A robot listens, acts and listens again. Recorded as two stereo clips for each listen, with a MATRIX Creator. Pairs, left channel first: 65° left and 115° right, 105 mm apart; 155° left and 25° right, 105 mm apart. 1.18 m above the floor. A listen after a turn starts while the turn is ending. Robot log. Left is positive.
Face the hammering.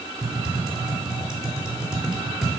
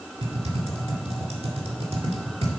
cmd idle
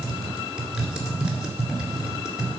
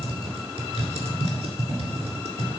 cmd idle
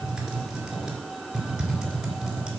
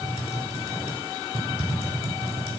end: I can't make out hammering, only typing on a keyboard.